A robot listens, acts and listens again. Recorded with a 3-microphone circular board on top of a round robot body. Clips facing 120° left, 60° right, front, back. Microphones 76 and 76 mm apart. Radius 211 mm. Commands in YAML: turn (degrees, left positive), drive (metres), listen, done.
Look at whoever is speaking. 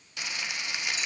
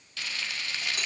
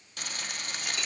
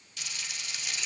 listen: true
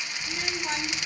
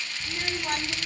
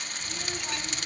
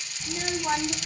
turn: -140
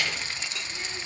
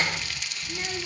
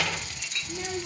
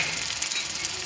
done: "Found it: a child speaking, straight ahead, 1 to 2 m away."